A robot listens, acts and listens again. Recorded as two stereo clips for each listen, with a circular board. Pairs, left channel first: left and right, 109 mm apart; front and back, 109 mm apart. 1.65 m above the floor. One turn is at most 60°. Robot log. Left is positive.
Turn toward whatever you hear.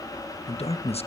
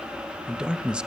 note: The man speaking: 100° left.
cmd yaw +60
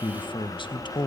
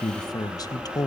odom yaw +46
note: The man speaking is now 50° left.
cmd yaw +50
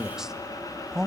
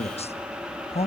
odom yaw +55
end: Facing the man speaking.